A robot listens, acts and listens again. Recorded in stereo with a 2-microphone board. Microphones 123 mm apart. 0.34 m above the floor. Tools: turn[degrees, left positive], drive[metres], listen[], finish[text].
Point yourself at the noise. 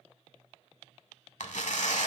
Action: turn[90]
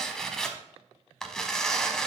Action: finish[Found it: tearing paper, straight ahead, under 1 m away.]